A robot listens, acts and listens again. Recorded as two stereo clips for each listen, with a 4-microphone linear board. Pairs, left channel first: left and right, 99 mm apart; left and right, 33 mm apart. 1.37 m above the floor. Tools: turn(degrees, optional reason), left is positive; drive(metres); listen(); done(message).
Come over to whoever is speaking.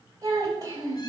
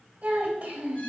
turn(degrees=-35, reason="The child speaking: about 35° right or 145° right.")
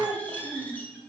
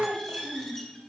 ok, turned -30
turn(degrees=-115, reason="So it is at 115° right.")
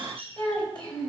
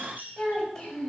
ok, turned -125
turn(degrees=10, reason="The child speaking is now 10° left.")
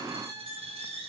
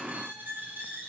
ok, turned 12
listen()
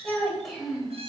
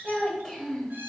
drive(metres=1.0)
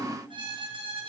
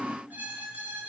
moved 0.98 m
listen()
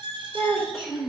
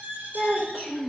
drive(metres=1.0)
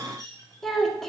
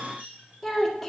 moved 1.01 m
drive(metres=1.0)
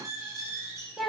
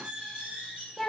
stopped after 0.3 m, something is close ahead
done("Arrived at the child speaking, straight ahead.")